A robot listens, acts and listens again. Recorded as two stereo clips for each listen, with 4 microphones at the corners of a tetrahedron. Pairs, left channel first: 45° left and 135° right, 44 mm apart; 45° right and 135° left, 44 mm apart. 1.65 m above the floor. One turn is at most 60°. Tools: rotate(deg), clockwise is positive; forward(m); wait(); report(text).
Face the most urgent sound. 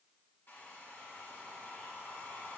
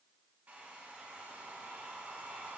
wait()
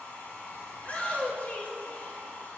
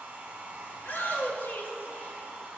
rotate(10)
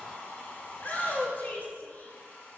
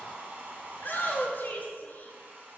report("Facing the shout.")